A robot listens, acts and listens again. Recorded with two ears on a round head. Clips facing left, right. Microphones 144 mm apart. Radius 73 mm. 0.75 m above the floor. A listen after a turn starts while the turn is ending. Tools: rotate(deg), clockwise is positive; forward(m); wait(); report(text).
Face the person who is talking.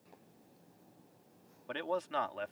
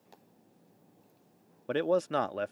rotate(55)
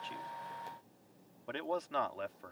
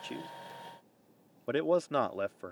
rotate(60)
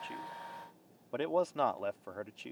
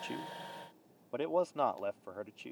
report("Found it: a man speaking, straight ahead.")